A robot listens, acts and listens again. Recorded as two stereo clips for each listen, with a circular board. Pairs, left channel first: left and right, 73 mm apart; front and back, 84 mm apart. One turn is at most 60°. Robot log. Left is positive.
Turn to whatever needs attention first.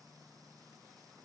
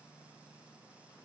cmd idle
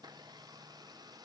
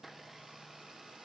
cmd idle
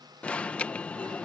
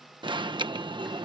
note: The alarm: 165° left.
cmd yaw +60
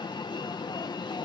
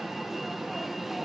note: The alarm is now 90° left.
cmd yaw +60
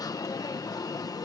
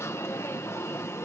note: The alarm is now 60° left.
cmd yaw +60
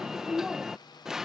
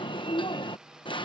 end: Found it: an alarm, straight ahead.